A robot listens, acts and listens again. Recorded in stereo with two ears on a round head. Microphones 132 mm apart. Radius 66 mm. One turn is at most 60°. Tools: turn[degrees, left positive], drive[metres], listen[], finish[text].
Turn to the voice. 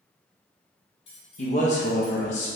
Thought: The man speaking: about 50° left or 130° left.
Action: turn[50]
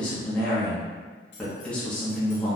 Thought: So it is at 10° left.
Action: turn[10]
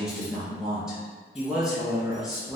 Action: finish[Facing the man speaking.]